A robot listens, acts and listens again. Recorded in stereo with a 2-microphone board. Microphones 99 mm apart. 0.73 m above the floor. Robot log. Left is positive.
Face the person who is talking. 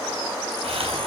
cmd idle
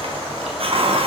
cmd idle
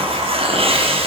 end: I can't make out anyone speaking to turn to.